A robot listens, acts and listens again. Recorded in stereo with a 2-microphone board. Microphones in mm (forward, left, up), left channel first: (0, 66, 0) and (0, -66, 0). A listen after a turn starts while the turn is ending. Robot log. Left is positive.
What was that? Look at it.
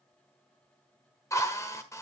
note: The drill: about 25° left or 155° left.
cmd yaw +25
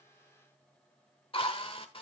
note: So it is at 130° left.
cmd yaw +130
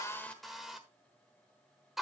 end: Found it: a drill, straight ahead, 1 to 2 m away.